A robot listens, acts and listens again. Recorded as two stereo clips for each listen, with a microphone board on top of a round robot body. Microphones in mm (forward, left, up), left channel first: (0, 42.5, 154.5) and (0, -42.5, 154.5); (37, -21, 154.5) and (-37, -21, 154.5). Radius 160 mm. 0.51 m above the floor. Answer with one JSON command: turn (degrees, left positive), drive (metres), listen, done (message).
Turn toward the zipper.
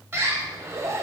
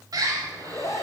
{"turn": -35}
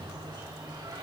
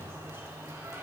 {"listen": true}
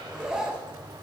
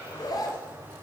{"turn": -10}
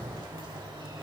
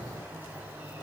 {"listen": true}
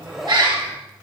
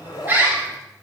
{"done": "Found it: a zipper, straight ahead, under 1 m away."}